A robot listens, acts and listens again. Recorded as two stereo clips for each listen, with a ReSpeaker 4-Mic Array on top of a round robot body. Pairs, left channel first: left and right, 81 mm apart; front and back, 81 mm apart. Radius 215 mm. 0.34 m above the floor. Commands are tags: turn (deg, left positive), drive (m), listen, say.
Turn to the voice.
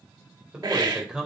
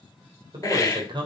<turn deg="-170"/>
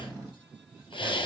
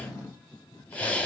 <listen/>
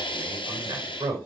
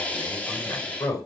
<turn deg="-45"/>
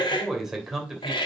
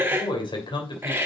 <say>Found it: a man speaking, straight ahead.</say>